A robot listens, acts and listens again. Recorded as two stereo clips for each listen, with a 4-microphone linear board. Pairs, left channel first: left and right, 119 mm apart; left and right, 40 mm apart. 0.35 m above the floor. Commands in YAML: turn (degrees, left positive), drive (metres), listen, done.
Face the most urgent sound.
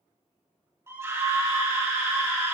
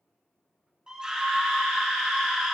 turn: -25
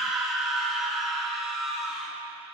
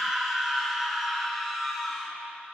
done: "Facing the scream, 2 to 4 m away."